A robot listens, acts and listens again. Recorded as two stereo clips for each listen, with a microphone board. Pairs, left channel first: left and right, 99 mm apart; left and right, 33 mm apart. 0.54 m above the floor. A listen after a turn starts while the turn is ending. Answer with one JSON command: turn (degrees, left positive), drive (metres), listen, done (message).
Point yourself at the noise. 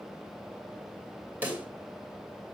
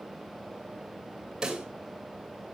{"turn": -20}
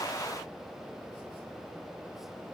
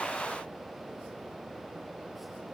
{"listen": true}
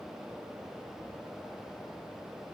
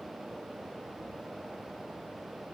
{"done": "I heard a pop, but can't make it out now. It was about straight ahead or 140° right."}